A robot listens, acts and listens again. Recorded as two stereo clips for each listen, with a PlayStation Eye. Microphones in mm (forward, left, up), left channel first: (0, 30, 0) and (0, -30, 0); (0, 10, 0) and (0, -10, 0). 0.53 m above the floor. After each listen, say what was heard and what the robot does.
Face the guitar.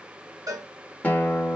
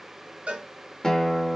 The guitar: about 25° left or 155° left. Turn 25° left.
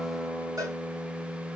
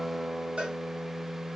Facing the guitar, under 1 m away.